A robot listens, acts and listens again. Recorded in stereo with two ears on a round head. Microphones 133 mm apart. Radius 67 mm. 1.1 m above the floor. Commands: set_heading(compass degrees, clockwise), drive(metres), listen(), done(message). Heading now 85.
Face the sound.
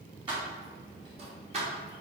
set_heading(130)
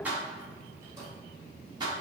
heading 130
set_heading(160)
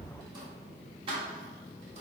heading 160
set_heading(195)
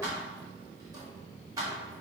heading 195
set_heading(215)
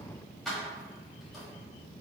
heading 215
done("Found it: keys jangling, straight ahead, 1 to 2 m away.")